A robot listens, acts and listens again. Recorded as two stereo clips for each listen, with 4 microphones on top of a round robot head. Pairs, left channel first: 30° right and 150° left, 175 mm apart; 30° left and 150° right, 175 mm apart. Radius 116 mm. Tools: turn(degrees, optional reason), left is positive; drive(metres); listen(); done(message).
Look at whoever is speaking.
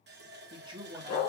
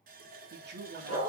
turn(degrees=-150, reason="The man speaking: 150° right.")
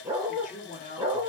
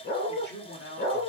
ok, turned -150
turn(degrees=10, reason="The man speaking is now 10° left.")
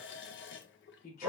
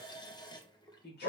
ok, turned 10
done("Facing the man speaking.")